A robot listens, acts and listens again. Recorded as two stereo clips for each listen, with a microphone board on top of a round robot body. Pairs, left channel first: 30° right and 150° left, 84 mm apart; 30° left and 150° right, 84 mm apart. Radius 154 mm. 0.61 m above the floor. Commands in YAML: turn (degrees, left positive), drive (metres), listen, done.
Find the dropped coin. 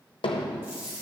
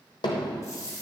turn: 85
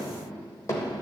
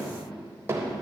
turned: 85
done: "I heard a dropped coin from this way, but can't make it out now."